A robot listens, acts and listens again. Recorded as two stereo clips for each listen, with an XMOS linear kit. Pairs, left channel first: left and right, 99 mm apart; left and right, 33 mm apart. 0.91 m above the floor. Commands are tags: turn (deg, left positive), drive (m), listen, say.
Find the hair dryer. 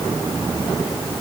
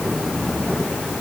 <listen/>
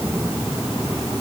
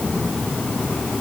<listen/>
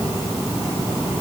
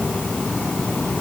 <say>I can't make out a hair dryer.</say>